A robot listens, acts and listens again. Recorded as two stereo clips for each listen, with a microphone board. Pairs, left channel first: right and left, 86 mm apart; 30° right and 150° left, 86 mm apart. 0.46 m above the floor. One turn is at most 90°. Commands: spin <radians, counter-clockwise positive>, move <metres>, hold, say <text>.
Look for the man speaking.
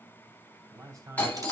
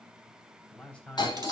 spin 0.79
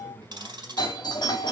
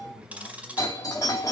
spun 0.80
say Facing the man speaking, 2 to 4 m away.